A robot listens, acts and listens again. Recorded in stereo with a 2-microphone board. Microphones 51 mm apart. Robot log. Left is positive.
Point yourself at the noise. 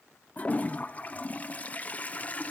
note: The toilet flushing: about 30° left or 150° left.
cmd yaw +30
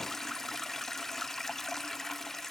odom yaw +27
end: Found it: a toilet flushing, straight ahead.